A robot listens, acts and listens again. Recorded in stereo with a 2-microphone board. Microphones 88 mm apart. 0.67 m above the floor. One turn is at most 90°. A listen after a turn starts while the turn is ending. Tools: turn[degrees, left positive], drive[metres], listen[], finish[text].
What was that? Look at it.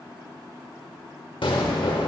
Action: turn[90]
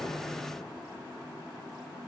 Action: finish[I heard an explosion from this way, but can't make it out now.]